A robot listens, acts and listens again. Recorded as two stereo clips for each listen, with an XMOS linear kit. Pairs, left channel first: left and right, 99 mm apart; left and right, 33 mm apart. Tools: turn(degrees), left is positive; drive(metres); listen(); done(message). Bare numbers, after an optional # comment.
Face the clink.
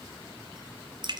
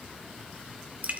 listen()
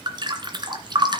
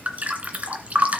listen()
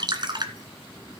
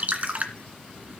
done("I can't make out a clink, only dripping.")